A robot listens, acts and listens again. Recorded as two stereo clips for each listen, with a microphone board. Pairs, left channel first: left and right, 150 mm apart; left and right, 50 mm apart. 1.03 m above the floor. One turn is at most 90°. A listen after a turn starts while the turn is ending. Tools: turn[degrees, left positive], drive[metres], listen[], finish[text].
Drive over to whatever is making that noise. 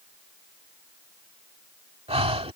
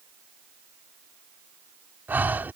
Thought: The breathing: about 40° right or 140° right.
Action: turn[-40]
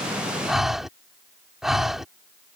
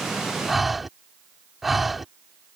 Action: drive[1.0]
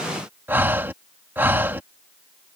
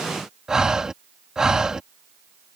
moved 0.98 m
Thought: The breathing is now 15° right.
Action: turn[-15]
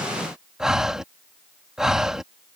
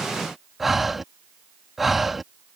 Action: drive[1.0]
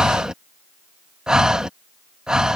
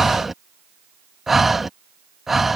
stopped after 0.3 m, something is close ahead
Action: finish[Arrived at the breathing, straight ahead.]